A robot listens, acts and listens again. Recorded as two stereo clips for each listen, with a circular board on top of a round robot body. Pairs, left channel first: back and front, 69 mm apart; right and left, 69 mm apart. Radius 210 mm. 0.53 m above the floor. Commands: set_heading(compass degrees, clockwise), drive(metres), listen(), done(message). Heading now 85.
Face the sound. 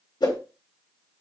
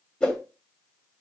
set_heading(250)
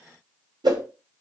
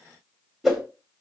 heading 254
done("Facing the whoosh.")